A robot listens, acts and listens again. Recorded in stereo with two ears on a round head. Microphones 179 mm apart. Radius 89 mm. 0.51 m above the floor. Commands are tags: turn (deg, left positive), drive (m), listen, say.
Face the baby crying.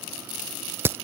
<listen/>
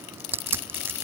<listen/>
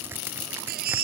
<turn deg="-50"/>
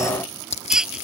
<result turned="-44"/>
<say>Facing the baby crying.</say>